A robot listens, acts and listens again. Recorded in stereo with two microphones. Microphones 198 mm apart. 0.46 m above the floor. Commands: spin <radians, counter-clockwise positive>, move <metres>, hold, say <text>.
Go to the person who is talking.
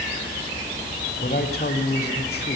spin 0.96
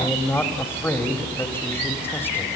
spin 0.17
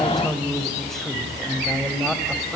move 1.0
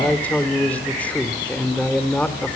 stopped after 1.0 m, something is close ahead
spin 0.17
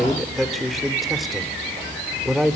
say Arrived at the man speaking, straight ahead.